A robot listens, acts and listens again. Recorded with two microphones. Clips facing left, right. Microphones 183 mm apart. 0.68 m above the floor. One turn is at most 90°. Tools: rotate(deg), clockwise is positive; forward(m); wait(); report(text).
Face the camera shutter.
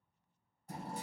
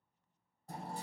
wait()
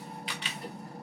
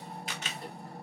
rotate(45)
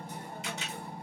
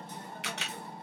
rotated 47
rotate(80)
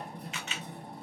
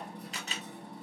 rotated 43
rotate(40)
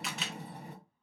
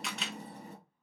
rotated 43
report("Facing the camera shutter, under 1 m away.")